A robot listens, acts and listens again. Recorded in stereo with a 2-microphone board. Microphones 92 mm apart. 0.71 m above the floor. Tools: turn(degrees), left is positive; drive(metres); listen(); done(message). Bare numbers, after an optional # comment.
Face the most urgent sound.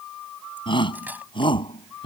# The shout: about 60° left or 120° left.
turn(60)
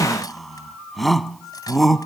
done("Facing the shout.")